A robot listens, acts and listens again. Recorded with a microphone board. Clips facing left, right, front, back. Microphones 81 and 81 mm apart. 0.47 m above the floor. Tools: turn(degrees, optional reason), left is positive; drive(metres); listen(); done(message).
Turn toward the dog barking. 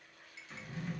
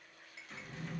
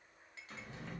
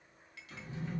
listen()
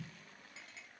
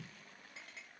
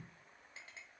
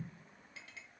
listen()
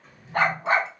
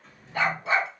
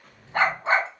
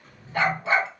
turn(degrees=50, reason="The dog barking: 50° left.")
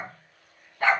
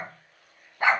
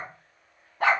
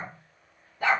turn(degrees=-20, reason="The dog barking is now 20° right.")
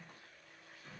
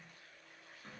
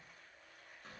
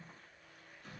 listen()
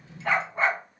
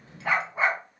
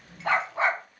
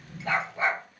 done("Facing the dog barking, under 1 m away.")